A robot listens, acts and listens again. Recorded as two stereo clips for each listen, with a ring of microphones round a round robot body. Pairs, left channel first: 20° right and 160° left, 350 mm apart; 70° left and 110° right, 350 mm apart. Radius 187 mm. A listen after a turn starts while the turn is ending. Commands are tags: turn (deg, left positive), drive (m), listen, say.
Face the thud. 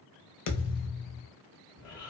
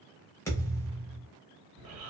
<turn deg="-15"/>
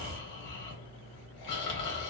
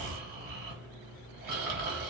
<say>I heard a thud from this way, but can't make it out now.</say>